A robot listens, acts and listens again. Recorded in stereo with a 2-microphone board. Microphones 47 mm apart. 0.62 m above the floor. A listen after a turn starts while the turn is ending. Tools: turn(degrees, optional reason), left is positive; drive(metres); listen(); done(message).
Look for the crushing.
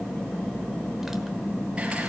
listen()
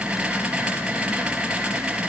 listen()
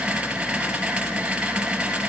done("I can't make out crushing to turn to.")